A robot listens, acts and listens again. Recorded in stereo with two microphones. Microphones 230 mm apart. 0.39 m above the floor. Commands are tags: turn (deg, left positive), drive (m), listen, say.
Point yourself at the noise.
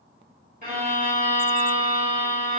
<turn deg="-35"/>
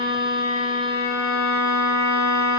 <turn deg="-110"/>
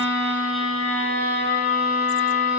<say>Facing the violin, 1 to 2 m away.</say>